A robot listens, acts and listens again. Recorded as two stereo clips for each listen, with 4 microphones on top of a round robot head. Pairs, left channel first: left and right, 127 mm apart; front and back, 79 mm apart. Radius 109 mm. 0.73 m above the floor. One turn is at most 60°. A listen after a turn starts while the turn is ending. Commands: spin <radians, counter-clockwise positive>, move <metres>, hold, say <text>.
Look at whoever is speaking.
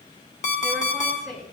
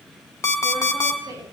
spin 1.05
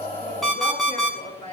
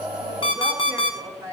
spin 1.05
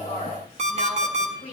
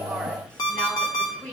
spin 1.05
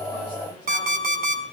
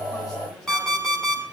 spin 0.26
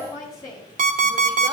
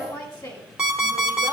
spin 0.52
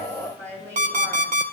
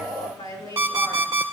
spin 0.17
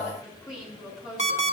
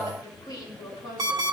say Facing the woman speaking, over 4 m away.